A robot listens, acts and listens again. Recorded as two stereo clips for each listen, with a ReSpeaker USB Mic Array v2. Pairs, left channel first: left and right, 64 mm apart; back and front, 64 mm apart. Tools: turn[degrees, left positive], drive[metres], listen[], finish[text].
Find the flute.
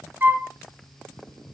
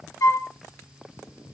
Thought: The flute: 150° right.
Action: turn[-150]
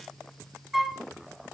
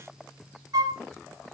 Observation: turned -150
Action: finish[Facing the flute, under 1 m away.]